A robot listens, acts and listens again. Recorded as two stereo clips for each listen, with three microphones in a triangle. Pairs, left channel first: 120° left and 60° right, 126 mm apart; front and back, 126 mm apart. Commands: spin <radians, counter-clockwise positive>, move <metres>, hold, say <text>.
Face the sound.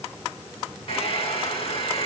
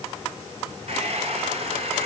spin 2.71
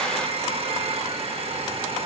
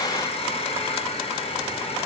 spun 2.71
spin -0.52
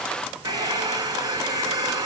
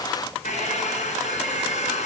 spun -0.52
say Facing the hair dryer.